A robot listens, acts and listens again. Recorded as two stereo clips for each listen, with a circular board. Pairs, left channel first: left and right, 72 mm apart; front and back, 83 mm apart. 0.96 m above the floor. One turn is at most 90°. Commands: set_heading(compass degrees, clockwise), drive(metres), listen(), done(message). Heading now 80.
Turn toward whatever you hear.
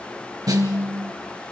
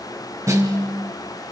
set_heading(170)
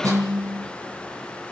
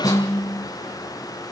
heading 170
set_heading(220)
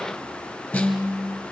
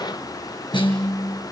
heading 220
set_heading(205)
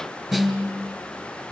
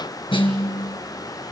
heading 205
done("Facing the snare drum, 2 to 4 m away.")